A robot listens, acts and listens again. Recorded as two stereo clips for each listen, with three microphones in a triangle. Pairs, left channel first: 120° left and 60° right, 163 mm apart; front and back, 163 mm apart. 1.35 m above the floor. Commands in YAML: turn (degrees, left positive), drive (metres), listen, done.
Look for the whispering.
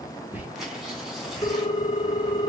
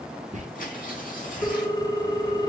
turn: -140
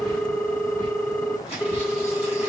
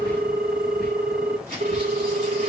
listen: true
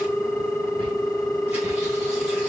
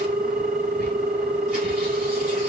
listen: true
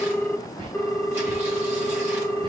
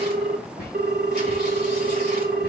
done: "Facing the whispering."